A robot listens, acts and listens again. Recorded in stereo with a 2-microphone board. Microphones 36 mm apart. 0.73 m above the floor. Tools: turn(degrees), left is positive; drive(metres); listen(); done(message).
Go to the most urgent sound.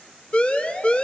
turn(degrees=30)
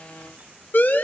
turn(degrees=120)
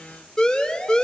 turn(degrees=25)
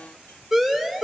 drive(metres=1.0)
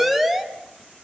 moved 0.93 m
drive(metres=1.0)
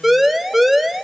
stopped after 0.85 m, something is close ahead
done("Arrived at the siren, straight ahead.")